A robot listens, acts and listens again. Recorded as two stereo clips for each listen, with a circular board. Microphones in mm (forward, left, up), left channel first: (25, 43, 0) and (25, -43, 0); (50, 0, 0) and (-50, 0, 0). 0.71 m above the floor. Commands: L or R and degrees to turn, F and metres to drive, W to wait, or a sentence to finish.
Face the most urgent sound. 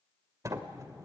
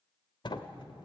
W
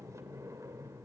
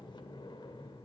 W
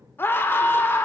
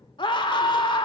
L30
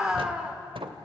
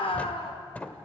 R10
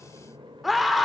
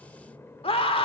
Facing the scream, 1 to 2 m away.